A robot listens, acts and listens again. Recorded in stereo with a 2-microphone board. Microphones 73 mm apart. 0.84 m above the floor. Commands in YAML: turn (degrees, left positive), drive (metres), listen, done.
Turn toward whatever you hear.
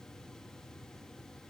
listen: true
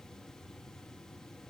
listen: true
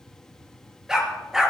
turn: -30
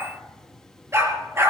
turn: -140
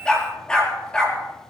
turn: 10
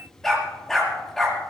done: "Found it: a dog barking, straight ahead."